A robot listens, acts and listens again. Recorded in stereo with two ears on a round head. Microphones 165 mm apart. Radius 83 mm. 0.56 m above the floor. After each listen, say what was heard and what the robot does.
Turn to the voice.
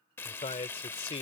The man speaking: about 35° left or 145° left. Turn 35° left.
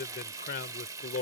So it is at 110° left. Turn 110° left.
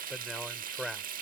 Found it: a man speaking, straight ahead.